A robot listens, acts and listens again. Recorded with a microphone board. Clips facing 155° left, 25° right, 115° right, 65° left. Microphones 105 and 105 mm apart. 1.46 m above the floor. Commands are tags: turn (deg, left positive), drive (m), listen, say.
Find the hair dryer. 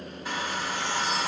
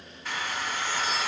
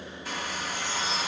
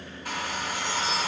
<turn deg="85"/>
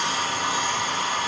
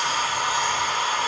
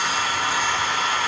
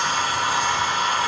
<say>Facing the hair dryer.</say>